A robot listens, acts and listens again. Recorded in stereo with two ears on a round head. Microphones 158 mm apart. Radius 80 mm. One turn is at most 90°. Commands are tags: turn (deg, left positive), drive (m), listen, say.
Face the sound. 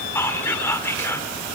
<turn deg="30"/>
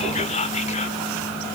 <turn deg="90"/>
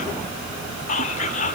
<turn deg="45"/>
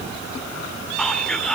<say>Facing the whispering.</say>